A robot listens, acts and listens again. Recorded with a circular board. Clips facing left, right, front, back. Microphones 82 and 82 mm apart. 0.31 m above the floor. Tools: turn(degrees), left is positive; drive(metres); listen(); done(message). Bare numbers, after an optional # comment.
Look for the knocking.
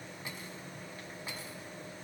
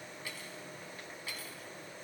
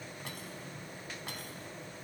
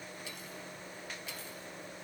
listen()
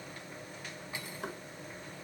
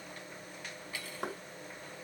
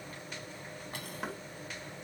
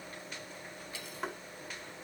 # The knocking: 85° right.
turn(-85)
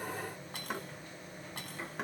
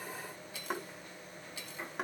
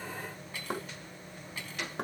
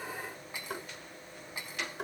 done("Found it: knocking, straight ahead.")